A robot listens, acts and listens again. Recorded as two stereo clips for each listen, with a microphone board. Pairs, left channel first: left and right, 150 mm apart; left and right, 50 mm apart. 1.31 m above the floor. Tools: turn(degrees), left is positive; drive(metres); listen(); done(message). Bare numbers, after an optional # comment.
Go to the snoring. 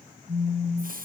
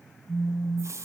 listen()
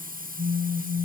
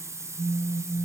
listen()
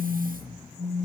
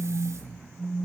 # The snoring: about 35° left or 145° left.
turn(35)
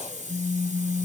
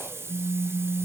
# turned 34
listen()
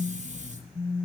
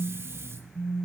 drive(1.0)
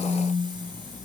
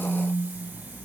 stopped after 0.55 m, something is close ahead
done("Something is in my way. I am facing the snoring but have not reached it.")